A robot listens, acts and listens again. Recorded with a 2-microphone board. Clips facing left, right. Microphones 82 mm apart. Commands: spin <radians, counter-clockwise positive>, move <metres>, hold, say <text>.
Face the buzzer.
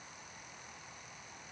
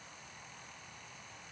hold
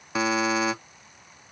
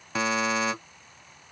spin 0.52
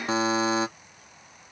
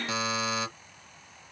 spin 2.44
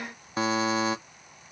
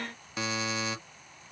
spin 0.79
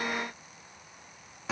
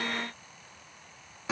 say Found it: a buzzer, straight ahead.